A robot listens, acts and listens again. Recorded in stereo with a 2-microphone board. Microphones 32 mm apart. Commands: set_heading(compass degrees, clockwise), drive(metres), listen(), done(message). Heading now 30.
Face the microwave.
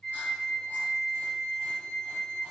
listen()
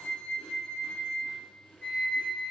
listen()
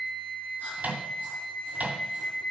set_heading(90)
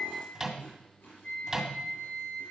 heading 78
set_heading(93)
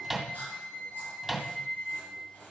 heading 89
done("Found it: a microwave, straight ahead.")